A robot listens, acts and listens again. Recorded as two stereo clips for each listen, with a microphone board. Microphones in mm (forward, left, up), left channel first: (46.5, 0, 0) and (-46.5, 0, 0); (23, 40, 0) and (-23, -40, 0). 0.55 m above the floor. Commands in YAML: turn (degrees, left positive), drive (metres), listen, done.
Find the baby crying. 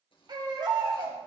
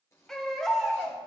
turn: 145
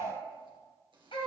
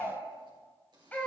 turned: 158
turn: -10
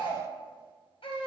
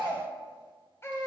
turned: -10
done: "Facing the baby crying."